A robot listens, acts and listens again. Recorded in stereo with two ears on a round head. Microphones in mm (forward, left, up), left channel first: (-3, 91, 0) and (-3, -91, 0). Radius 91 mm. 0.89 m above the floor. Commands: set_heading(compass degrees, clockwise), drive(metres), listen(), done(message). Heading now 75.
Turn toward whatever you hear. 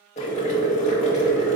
set_heading(40)
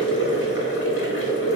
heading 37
set_heading(292)
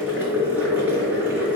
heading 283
set_heading(293)
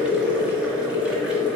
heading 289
done("Found it: boiling, straight ahead.")